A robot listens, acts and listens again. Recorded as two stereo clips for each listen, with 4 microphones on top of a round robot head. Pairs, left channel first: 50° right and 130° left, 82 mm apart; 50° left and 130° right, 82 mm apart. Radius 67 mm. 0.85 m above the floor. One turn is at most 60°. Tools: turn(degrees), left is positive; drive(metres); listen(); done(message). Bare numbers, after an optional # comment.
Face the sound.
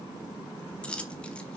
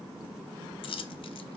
# The dropped coin: 25° left.
turn(25)
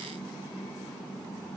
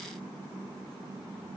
done("Facing where the dropped coin came from. I can't hear it now.")